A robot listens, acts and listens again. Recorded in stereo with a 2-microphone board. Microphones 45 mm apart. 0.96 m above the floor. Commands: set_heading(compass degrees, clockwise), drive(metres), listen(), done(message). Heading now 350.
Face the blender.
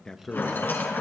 listen()
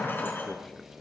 listen()
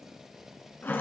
done("I can't make out a blender to turn to.")